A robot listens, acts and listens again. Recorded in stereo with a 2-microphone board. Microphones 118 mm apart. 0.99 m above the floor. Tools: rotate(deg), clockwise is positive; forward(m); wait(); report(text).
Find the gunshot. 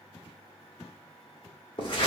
wait()
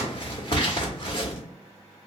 wait()
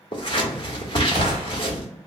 rotate(40)
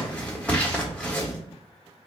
wait()
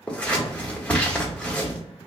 report("I heard a gunshot, but can't make it out now. It was about straight ahead or 100° right.")